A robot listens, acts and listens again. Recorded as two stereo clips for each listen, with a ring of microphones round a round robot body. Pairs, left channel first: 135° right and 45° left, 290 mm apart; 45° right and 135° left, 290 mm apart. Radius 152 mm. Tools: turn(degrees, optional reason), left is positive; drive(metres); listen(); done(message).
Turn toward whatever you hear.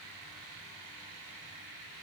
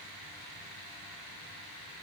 listen()
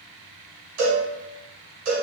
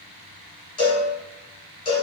turn(degrees=30, reason="The cowbell: 30° left.")
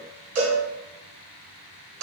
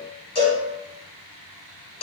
turn(degrees=25, reason="The cowbell is now 25° left.")
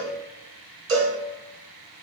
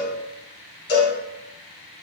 turn(degrees=10, reason="The cowbell is now 10° left.")
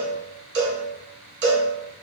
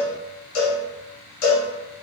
done("Found it: a cowbell, straight ahead, 1 to 2 m away.")